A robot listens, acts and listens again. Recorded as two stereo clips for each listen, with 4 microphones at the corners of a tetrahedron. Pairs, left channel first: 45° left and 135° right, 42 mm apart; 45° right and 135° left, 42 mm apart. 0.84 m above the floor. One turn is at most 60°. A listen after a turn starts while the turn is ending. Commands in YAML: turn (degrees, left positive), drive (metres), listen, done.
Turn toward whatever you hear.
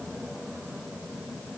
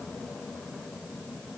listen: true
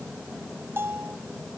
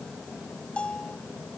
turn: -60
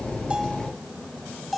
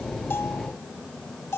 turn: -45
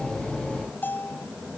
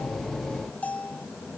done: "Found it: a bell, straight ahead."